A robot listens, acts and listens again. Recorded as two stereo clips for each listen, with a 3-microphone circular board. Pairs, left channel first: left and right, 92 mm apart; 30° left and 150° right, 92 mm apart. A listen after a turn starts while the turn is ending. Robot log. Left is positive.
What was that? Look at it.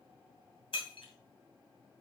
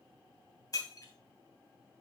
note: The breaking glass: 75° left.
cmd yaw +75
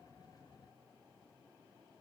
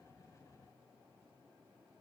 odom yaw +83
end: Facing where the breaking glass came from. I can't hear it now.